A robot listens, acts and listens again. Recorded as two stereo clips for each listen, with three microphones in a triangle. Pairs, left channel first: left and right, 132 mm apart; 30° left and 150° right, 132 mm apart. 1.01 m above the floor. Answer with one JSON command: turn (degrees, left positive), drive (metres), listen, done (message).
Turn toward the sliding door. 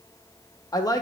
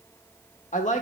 {"listen": true}
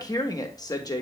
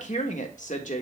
{"listen": true}
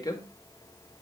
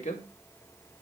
{"done": "I can't make out a sliding door to turn to."}